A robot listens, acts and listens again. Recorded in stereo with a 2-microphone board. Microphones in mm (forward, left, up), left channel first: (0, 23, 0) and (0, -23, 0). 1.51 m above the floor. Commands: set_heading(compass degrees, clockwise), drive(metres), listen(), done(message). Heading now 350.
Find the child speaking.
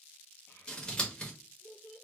set_heading(280)
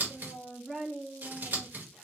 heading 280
done("Facing the child speaking.")